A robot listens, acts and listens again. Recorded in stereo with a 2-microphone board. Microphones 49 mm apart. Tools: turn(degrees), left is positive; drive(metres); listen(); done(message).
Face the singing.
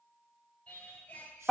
turn(degrees=20)
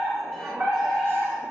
listen()
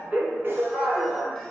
listen()
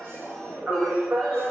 done("I heard singing, but can't make it out now. It was about straight ahead or 140° left.")